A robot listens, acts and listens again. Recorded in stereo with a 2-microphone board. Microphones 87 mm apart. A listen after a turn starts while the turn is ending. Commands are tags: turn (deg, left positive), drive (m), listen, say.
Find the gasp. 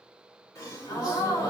<turn deg="40"/>
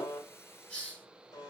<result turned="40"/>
<listen/>
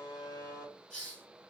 <say>I heard a gasp, but can't make it out now. It was about straight ahead or 100° left.</say>